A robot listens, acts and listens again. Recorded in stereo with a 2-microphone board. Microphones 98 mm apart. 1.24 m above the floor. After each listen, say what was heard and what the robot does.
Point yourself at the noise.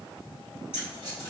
The keys jangling: about 65° left or 115° left. Turn 65° left.
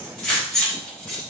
Found it: keys jangling, straight ahead, 1 to 2 m away.